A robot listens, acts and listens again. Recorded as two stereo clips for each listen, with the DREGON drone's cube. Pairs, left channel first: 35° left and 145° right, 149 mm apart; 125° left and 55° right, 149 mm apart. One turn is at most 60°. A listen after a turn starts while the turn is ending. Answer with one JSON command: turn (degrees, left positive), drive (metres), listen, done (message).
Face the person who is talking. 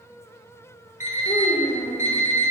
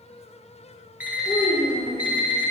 {"turn": 60}
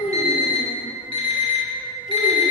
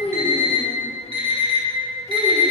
{"turn": 35}
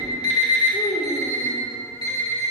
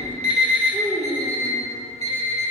{"turn": 50}
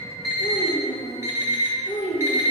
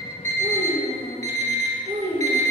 {"turn": -10}
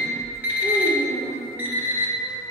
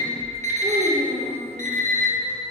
{"done": "Facing the child speaking, 1 to 2 m away."}